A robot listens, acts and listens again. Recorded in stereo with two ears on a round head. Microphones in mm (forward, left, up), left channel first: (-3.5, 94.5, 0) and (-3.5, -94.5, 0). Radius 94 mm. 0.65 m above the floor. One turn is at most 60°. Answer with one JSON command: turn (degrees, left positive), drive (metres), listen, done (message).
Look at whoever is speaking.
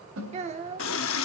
{"turn": -30}
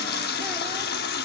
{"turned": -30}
{"listen": true}
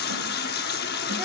{"listen": true}
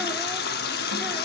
{"done": "I heard a child speaking, but can't make it out now. It was about straight ahead or 120° right."}